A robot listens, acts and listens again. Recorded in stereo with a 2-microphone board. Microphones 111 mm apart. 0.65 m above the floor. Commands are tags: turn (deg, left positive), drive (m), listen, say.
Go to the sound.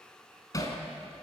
<turn deg="30"/>
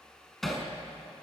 <drive m="1.0"/>
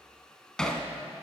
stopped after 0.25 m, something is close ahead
<say>Blocked. The hammering is further on, straight ahead.</say>